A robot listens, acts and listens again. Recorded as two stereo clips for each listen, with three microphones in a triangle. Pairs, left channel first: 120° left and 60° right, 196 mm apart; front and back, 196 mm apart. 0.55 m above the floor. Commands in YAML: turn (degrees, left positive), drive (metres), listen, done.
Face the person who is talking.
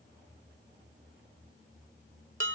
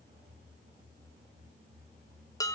listen: true
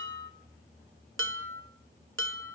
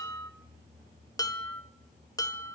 listen: true
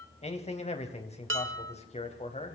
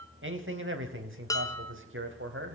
turn: 180
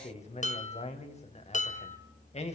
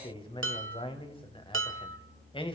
turn: 65
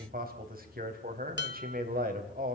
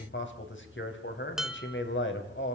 turn: -15
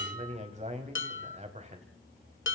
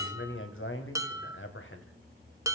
done: "Facing the man speaking."